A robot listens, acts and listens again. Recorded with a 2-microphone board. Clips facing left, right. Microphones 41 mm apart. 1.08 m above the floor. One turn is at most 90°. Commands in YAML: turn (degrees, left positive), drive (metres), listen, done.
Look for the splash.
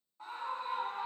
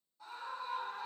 listen: true
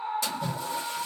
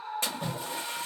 turn: -45
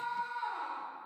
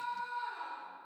listen: true
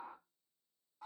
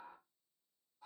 done: "I heard a splash, but can't make it out now. It was about straight ahead or 90° right."